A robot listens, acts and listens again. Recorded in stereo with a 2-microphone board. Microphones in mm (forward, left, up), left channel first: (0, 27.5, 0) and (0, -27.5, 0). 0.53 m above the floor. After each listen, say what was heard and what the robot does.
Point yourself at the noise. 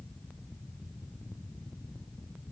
Keep listening.
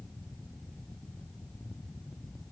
Keep listening.
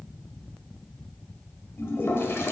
The toilet flushing: about 45° left or 135° left. Turn 45° left.
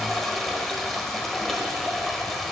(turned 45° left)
Facing the toilet flushing, 1 to 2 m away.